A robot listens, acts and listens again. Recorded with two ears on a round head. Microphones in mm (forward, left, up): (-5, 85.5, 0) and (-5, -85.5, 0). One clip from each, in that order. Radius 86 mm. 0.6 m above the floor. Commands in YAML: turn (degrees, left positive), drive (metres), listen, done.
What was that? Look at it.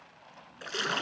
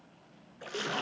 turn: 65
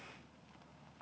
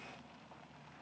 listen: true
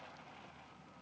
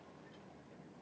done: "I heard a splash, but can't make it out now. It was about straight ahead or 50° left."